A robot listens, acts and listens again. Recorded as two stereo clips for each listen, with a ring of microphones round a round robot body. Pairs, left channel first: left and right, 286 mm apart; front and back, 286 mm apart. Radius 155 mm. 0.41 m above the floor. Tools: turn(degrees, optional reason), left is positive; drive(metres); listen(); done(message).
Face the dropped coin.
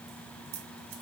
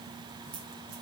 turn(degrees=-105, reason="The dropped coin: 105° right.")
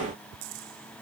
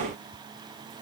done("Facing where the dropped coin came from. I can't hear it now.")